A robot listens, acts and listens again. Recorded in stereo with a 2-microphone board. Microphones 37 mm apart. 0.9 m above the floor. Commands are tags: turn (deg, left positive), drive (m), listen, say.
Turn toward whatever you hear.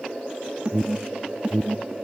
<turn deg="-30"/>
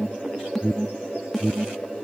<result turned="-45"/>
<turn deg="10"/>
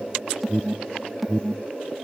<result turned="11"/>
<say>Facing the alarm.</say>